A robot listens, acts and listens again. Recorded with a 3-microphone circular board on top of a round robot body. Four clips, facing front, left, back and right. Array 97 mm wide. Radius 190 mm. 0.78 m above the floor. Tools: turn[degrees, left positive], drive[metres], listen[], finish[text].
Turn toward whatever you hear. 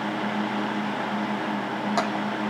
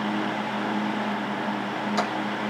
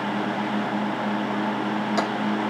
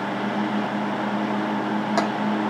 Action: listen[]
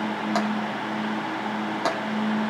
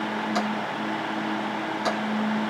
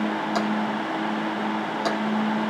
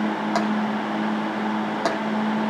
Thought: The tapping: 65° right.
Action: turn[-65]
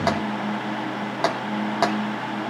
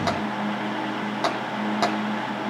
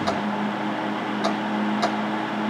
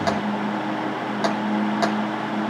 Thought: The tapping is now 15° left.
Action: turn[15]
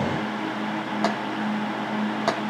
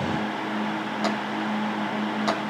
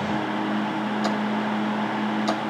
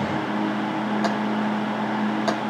Action: listen[]
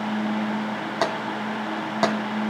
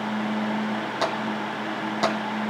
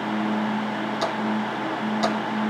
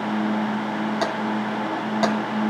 Action: finish[Facing the tapping.]